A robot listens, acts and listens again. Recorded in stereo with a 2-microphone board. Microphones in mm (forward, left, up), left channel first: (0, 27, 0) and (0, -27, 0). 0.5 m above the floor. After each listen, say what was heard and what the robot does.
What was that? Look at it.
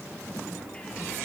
Keep listening.
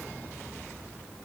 Keep listening.
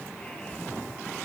I can't make out anything to turn to.